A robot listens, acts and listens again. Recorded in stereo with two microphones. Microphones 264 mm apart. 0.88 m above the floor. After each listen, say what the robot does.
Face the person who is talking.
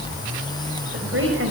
Turn 50° right.
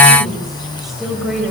Facing the woman speaking.